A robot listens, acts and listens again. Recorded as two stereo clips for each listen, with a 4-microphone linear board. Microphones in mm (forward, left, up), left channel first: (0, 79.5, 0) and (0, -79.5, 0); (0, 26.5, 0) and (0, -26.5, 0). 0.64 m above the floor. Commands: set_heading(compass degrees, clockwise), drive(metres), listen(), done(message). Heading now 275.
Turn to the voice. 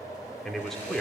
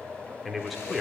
set_heading(245)
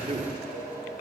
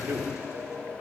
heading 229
set_heading(269)
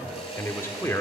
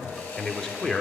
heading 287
set_heading(272)
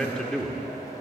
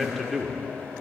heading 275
done("Facing the man speaking.")